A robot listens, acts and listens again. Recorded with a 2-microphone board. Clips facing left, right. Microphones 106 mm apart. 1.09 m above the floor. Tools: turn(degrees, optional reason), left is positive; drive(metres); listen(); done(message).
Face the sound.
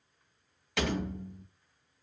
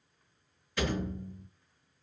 turn(degrees=90)
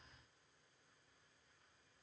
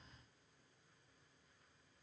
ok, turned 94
done("Facing where the door slam came from. I can't hear it now.")